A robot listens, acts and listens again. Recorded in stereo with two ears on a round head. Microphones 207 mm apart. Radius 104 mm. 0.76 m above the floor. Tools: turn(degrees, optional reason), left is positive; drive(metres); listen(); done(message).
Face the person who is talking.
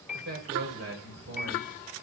turn(degrees=-55, reason="The man speaking: about 55° right or 125° right.")
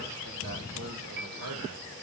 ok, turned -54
turn(degrees=-70, reason="So it is at 70° right.")
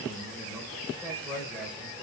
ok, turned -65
done("Facing the man speaking, 2 to 4 m away.")